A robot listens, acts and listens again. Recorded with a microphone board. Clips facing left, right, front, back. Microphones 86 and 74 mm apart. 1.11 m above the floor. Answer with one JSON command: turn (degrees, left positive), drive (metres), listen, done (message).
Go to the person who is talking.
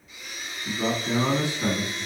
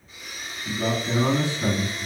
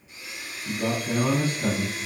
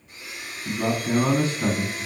{"turn": 170}
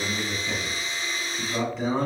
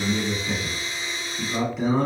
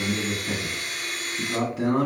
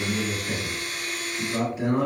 {"drive": 1.0}
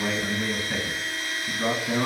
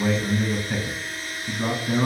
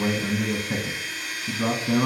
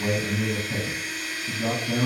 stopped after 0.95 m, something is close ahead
{"done": "I am next to the man speaking."}